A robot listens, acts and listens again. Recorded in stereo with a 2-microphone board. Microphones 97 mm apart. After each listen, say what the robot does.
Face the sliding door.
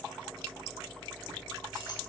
Keep listening.
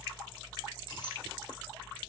Keep listening.
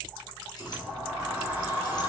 Turn 30° right.
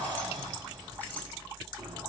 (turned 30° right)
Turn 135° right.
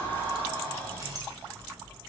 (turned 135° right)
Turn 20° left.
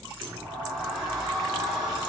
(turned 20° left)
Facing the sliding door, 1 to 2 m away.